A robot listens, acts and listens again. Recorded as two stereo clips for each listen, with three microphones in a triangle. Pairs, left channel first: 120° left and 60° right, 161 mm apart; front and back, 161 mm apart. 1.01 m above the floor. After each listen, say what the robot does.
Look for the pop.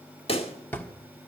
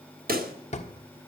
Turn 170° left.
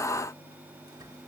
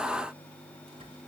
Facing where the pop came from. I can't hear it now.